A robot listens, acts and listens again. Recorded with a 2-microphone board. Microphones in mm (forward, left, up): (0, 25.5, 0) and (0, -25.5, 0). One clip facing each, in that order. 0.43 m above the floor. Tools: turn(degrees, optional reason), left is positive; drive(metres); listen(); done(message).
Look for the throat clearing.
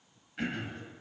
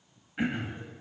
turn(degrees=-20, reason="The throat clearing: about 20° right or 160° right.")
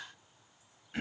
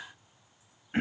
turn(degrees=-140, reason="So it is at 140° right.")
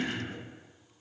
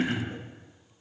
turn(degrees=-30, reason="The throat clearing is now 30° right.")
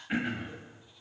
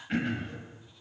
turn(degrees=10, reason="The throat clearing is now 10° left.")
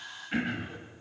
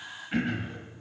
done("Found it: throat clearing, straight ahead.")